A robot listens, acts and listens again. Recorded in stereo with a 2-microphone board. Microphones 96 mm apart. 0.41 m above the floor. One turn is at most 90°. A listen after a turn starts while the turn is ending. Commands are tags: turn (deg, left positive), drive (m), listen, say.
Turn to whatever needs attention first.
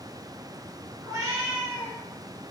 <listen/>
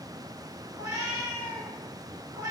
<listen/>
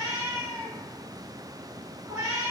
<say>I can't make out anything urgent to turn to.</say>